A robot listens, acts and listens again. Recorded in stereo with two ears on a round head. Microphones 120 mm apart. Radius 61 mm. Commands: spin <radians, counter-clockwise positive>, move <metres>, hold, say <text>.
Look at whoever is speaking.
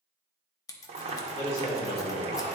spin 0.96
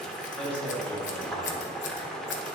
spin 0.17
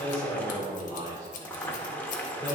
spin 0.26
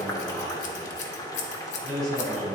say Facing the man speaking.